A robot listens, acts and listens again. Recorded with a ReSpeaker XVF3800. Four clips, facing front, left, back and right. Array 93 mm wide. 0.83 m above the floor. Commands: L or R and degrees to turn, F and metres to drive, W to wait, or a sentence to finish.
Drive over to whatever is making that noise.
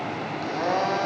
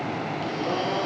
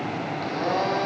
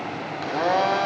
R85
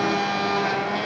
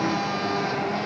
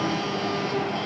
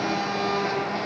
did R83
F1.0
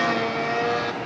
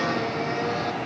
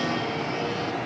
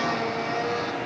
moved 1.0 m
F1.0
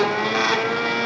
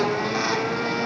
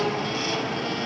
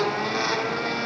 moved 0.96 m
F1.0
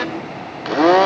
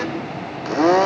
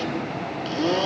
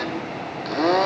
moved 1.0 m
L15
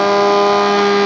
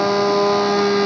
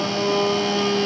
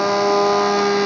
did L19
F1.0
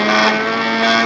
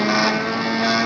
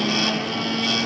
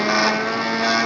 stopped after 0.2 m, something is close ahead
Arrived at the blender, straight ahead.